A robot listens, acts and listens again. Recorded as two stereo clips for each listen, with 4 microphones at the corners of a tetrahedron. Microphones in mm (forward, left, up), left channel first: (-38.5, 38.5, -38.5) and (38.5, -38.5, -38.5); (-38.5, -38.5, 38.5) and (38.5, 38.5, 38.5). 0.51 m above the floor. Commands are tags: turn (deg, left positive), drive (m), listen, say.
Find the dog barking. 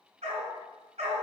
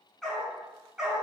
<turn deg="-35"/>
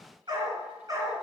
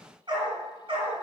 <turn deg="10"/>
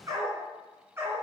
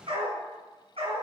<turn deg="25"/>
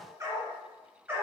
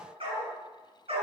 <turn deg="25"/>
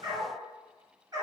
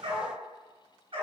<turn deg="10"/>
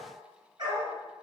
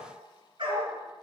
<say>Facing the dog barking, 2 to 4 m away.</say>